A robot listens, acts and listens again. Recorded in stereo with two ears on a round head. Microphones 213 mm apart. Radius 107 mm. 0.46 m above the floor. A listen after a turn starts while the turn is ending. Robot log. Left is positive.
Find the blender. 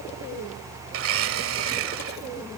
note: The blender: about 65° right or 115° right.
cmd yaw -65
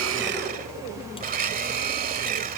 note: So it is at 40° right.
cmd yaw -40
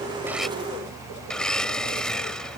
end: Found it: a blender, straight ahead.